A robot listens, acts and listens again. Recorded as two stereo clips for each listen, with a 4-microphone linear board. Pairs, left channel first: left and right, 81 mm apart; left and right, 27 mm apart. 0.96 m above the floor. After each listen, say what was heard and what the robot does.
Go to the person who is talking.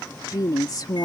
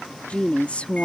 The woman speaking: about 55° left or 125° left. Turn 55° left.
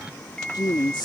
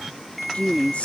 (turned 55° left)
So it is at 70° left. Turn 70° left.
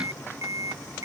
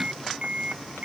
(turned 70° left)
Keep listening.
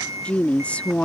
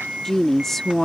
The woman speaking is now 15° left. Turn 15° left.
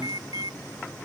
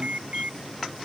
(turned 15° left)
Keep listening.
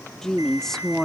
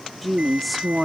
Drive 1.0 m forward.
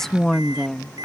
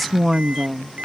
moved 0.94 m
Drive 1.0 m forward.
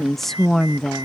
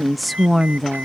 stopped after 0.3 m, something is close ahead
Arrived at the woman speaking, straight ahead.